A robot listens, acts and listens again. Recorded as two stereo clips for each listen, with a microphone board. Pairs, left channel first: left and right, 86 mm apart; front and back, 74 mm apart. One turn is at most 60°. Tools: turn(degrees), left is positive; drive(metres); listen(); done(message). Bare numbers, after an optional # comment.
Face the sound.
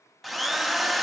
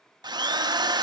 # The drill: straight behind.
turn(60)
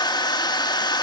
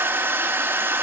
# The drill is now 120° left.
turn(60)
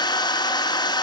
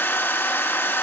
# The drill is now 60° left.
turn(60)
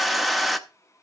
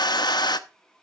done("Found it: a drill, straight ahead.")